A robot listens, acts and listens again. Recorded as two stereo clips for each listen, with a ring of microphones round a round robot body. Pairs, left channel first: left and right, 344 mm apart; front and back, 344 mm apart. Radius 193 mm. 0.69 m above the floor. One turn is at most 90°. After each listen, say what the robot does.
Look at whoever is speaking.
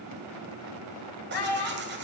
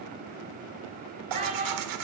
Turn 90° left.
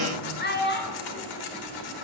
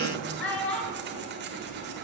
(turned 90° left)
Turn 30° left.
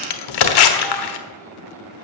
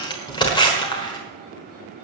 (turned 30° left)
Keep listening.
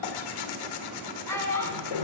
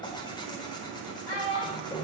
Turn 10° left.
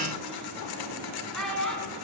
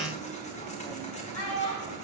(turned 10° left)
Facing the child speaking.